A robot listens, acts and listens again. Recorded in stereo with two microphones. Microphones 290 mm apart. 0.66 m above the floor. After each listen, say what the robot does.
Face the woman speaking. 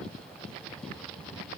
Keep listening.
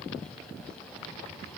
Keep listening.
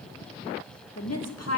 Turn 60° left.
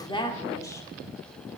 Turn 10° left.
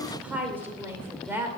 Facing the woman speaking, 2 to 4 m away.